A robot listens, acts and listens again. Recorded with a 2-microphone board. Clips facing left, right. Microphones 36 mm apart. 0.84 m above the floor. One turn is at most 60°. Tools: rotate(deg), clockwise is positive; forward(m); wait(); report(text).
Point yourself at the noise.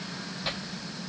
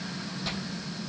rotate(-25)
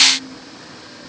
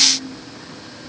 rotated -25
wait()
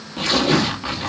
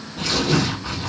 rotate(-60)
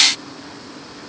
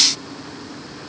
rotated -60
rotate(-60)
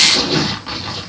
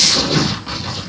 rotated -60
rotate(-15)
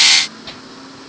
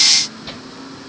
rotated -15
report("Found it: tearing paper, straight ahead, 1 to 2 m away.")